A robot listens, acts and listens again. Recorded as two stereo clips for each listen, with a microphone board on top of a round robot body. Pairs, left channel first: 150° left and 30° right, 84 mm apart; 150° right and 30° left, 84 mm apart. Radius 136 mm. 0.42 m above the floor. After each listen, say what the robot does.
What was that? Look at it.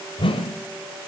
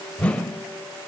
Turn 135° left.
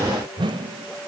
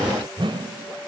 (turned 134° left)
Found it: a whoosh, straight ahead.